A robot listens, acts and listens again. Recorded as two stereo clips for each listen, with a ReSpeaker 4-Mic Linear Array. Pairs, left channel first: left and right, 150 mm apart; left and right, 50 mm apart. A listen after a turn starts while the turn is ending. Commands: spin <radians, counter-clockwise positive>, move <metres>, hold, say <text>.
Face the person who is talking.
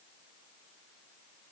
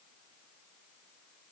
hold
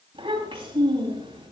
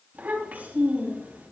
spin -0.70
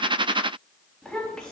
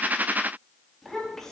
say Found it: a child speaking, straight ahead, over 4 m away.